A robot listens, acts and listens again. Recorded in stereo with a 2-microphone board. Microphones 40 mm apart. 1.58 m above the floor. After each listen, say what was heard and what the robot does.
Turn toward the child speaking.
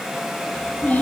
The child speaking: about 45° left or 135° left. Turn 45° left.
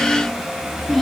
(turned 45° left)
Found it: a child speaking, straight ahead, 2 to 4 m away.